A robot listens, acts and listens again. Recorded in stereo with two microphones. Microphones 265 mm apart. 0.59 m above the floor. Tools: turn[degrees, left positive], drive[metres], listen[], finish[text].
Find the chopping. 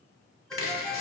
Thought: The chopping: about 50° left or 130° left.
Action: turn[50]
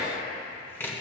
Thought: So it is at 10° left.
Action: turn[10]
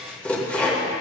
Action: finish[Found it: chopping, straight ahead.]